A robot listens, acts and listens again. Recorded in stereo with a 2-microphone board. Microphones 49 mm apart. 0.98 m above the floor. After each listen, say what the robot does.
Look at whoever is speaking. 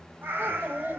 Turn 50° right.
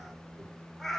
Keep listening.
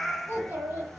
Turn 60° right.
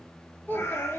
Turn 50° left.
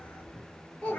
Turn 25° left.
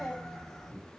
Turn 10° left.
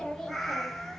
Facing the child speaking.